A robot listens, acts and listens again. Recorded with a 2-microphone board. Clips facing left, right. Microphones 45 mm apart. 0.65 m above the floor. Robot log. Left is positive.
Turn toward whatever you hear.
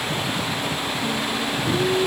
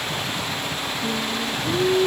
note: The singing: about 50° right or 130° right.
cmd yaw -50
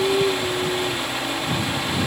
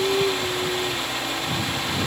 end: Facing the singing.